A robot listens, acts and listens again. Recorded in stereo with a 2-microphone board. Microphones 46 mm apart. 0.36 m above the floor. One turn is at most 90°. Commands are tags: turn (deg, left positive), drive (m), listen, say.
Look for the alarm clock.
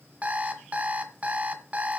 <turn deg="-30"/>
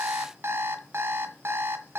<turn deg="-90"/>
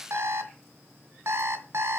<turn deg="-75"/>
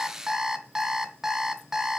<turn deg="-10"/>
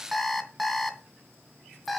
<say>Found it: an alarm clock, straight ahead.</say>